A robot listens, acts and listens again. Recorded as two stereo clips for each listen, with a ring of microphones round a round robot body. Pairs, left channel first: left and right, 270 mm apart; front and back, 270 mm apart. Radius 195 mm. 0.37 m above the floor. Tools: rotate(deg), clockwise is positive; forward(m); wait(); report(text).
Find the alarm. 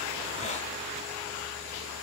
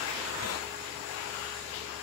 wait()
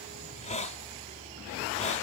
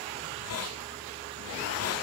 wait()
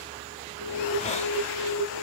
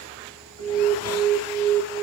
rotate(175)
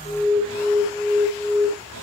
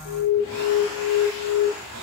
rotate(-25)
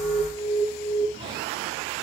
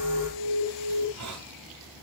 report("Facing the alarm.")